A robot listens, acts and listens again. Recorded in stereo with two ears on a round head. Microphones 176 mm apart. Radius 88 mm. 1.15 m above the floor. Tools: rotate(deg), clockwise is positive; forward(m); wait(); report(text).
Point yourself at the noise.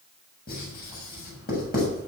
rotate(-45)
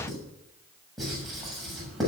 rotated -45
report("Facing the writing, over 4 m away.")